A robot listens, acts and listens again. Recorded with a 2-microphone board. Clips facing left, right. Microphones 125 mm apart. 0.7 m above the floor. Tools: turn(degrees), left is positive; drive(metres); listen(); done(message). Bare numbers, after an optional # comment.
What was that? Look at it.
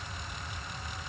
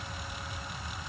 listen()
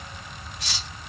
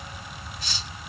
turn(90)
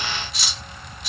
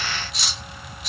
done("Found it: cutlery clinking, straight ahead, 1 to 2 m away.")